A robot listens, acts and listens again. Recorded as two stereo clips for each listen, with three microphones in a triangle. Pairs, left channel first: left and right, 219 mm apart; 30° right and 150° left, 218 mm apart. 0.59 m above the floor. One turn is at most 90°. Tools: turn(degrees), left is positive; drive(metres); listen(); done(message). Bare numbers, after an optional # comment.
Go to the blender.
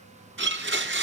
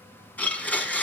# The blender: 115° right.
turn(-90)
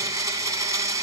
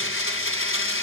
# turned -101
# The blender is now 15° right.
turn(-15)
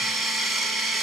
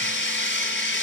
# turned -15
drive(1.0)
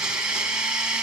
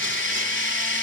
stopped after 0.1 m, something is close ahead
done("Something is in my way. I am facing the blender but have not reached it.")